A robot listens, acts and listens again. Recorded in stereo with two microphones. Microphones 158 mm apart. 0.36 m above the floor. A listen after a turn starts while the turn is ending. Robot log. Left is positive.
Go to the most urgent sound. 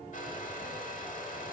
cmd idle
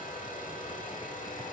cmd idle
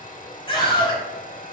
note: The scream: about 35° left or 145° left.
cmd yaw +35
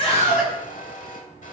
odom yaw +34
cmd idle
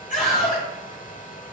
note: So it is at 105° left.
cmd yaw +105
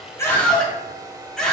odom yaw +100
cmd fwd 1.0
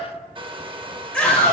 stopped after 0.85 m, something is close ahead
note: The scream is now 10° left.
cmd yaw +10
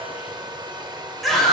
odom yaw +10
end: Arrived at the scream, straight ahead.